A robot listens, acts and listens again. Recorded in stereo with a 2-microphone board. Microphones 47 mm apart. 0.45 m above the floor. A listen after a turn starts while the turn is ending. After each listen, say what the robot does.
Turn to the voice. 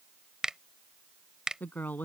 Turn 40° left.
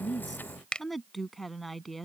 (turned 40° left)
Facing the woman speaking.